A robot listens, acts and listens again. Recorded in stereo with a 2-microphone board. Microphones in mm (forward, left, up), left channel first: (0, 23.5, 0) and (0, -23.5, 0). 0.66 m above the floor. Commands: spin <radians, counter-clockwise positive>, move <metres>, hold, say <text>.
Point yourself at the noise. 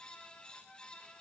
hold
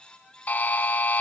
spin 0.70
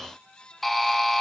say Found it: a buzzer, straight ahead.